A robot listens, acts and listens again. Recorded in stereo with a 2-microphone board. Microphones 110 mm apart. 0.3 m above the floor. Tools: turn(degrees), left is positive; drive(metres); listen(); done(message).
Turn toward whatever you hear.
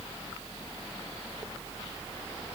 listen()
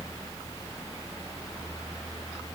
listen()
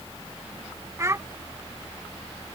turn(degrees=-25)
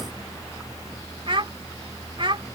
turn(degrees=-125)
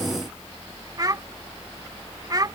turn(degrees=-40)
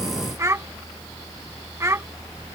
turn(degrees=-30)
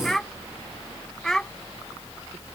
done("Found it: a child speaking, straight ahead.")